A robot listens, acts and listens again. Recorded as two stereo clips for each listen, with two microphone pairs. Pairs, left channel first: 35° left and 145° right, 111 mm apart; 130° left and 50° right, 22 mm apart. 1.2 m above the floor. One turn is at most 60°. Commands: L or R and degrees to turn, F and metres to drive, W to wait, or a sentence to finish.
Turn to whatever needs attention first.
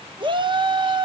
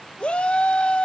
L60
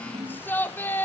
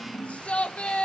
L60
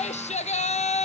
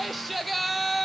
L45
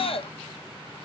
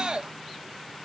Facing the shout.